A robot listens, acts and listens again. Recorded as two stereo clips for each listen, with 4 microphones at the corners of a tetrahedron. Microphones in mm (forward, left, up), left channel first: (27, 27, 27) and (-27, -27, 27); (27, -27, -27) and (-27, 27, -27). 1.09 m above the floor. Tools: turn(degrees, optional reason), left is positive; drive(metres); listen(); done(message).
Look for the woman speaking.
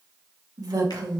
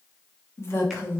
turn(degrees=-105, reason="The woman speaking: 105° right.")
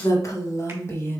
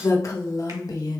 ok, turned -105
turn(degrees=-15, reason="The woman speaking is now 15° right.")
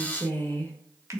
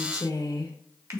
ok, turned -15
turn(degrees=-30, reason="The woman speaking is now 30° right.")
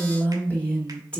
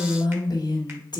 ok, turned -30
turn(degrees=-30, reason="The woman speaking is now 30° right.")
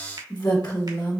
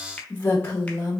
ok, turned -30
turn(degrees=20, reason="The woman speaking is now 20° left.")
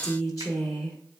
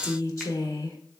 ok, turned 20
done("Found it: a woman speaking, straight ahead, 1 to 2 m away.")